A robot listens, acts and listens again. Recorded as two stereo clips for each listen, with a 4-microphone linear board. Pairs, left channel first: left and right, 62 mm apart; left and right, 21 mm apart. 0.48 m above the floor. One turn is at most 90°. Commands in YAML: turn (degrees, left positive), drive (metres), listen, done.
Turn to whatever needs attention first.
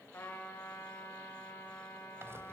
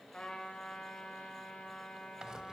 listen: true
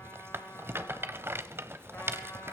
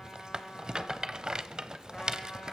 listen: true
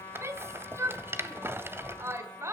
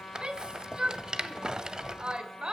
turn: -45
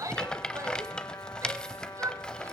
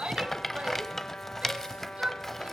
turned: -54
turn: -75
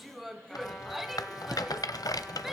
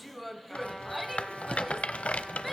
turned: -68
done: "Facing the shout."